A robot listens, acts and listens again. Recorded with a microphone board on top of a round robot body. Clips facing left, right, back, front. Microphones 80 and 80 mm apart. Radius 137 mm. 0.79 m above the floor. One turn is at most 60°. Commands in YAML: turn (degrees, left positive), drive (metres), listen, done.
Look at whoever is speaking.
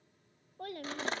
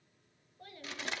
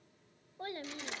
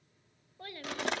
turn: 60
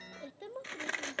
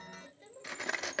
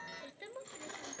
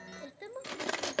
turn: 60
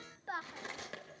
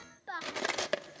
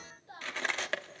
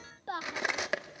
done: "Facing the child speaking, 1 to 2 m away."